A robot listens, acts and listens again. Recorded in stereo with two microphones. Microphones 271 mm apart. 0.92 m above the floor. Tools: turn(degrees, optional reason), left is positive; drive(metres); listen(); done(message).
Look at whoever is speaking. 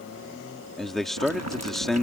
turn(degrees=30)
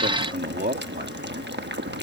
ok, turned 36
turn(degrees=-35, reason="So it is at 35° right.")
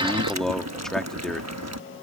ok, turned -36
done("Found it: a man speaking, straight ahead.")